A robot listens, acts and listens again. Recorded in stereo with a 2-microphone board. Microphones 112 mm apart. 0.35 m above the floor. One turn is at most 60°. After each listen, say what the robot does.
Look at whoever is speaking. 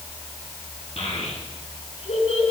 Turn 60° left.
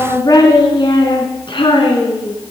Turn 60° left.
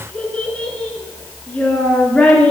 Turn 10° left.
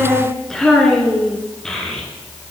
Found it: a child speaking, straight ahead, 2 to 4 m away.